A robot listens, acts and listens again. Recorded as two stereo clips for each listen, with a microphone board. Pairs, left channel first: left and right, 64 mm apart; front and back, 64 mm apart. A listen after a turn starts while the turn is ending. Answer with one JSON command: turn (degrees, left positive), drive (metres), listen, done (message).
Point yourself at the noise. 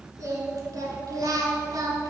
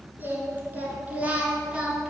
{"turn": -100}
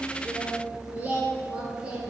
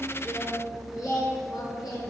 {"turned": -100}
{"turn": -15}
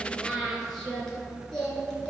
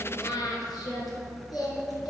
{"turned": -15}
{"turn": 15}
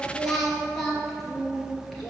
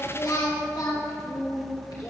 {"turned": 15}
{"done": "Facing the singing, 2 to 4 m away."}